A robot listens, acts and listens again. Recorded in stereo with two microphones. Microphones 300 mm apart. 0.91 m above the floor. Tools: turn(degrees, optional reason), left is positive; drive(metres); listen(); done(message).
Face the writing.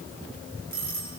listen()
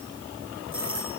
listen()
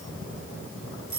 done("I can't make out writing, only a doorbell.")